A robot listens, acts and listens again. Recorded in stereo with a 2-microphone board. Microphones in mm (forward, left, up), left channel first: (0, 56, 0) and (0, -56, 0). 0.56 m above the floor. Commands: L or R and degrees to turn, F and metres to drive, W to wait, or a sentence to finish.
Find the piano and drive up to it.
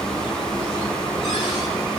W
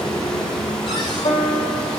L60
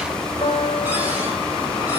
L50
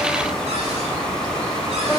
F1.0
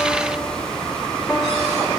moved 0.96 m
W
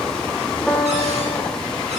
F1.0
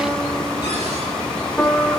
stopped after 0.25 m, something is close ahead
L10
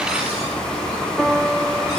Arrived at the piano, straight ahead.